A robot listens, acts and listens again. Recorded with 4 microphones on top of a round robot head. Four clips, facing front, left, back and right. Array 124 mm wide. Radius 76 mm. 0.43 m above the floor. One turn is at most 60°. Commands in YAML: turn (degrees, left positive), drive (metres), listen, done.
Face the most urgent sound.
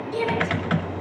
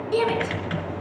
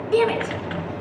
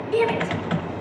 turn: 60
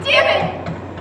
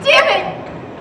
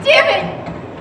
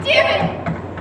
turn: 60
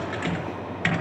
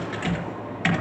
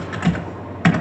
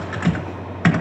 turn: 25
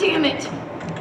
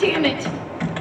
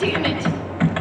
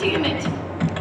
done: "Facing the shout."